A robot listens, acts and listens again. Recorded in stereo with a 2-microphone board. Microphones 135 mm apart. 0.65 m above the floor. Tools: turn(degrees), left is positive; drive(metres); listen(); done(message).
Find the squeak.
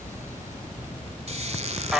turn(degrees=-55)
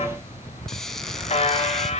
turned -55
done("Found it: a squeak, straight ahead.")